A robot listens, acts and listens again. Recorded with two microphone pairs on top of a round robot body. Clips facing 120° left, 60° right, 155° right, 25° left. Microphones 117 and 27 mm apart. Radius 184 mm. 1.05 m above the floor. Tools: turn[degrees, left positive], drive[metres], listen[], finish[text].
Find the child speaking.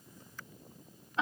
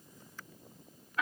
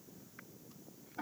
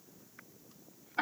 Action: listen[]
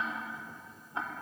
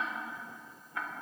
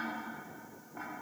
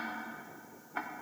Action: listen[]
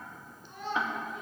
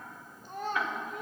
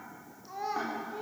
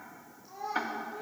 Thought: The child speaking: 100° right.
Action: turn[-100]
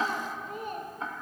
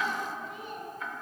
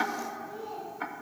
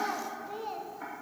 Thought: The child speaking is now 75° left.
Action: turn[75]
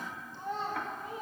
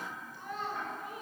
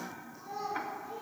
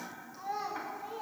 Thought: The child speaking is now 55° left.
Action: turn[55]
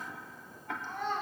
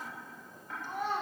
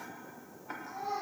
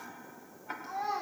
Thought: The child speaking is now 20° left.
Action: turn[20]
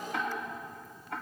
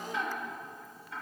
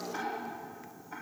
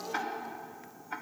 Action: finish[Found it: a child speaking, straight ahead, 1 to 2 m away.]